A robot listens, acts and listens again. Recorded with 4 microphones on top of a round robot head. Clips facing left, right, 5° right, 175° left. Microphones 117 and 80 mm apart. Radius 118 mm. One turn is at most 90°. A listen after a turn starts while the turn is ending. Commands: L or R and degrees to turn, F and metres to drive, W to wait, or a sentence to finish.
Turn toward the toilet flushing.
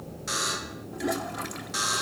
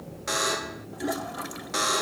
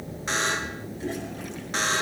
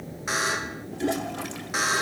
R90
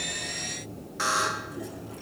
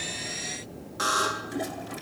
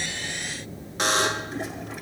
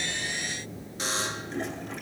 R85
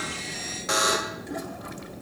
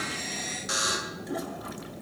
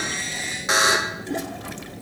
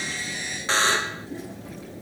W
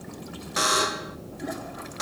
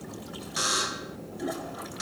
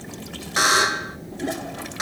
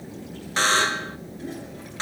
I heard a toilet flushing from this way, but can't make it out now.